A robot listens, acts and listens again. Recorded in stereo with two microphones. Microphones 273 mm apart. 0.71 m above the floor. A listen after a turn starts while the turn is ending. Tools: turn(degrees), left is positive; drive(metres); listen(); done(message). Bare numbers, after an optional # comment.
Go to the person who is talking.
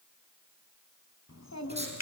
# The child speaking: about 70° left or 110° left.
turn(70)
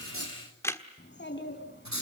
# So it is at 40° left.
turn(40)
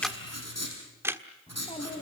# The child speaking is now 20° left.
turn(20)
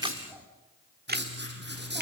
drive(1.0)
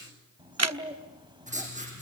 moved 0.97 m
# The child speaking is now 15° right.
turn(-15)
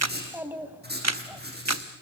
drive(1.0)
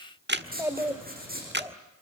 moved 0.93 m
# The child speaking is now 10° right.
turn(-10)
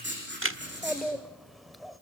drive(1.0)
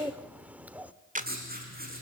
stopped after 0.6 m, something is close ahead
done("I am next to the child speaking.")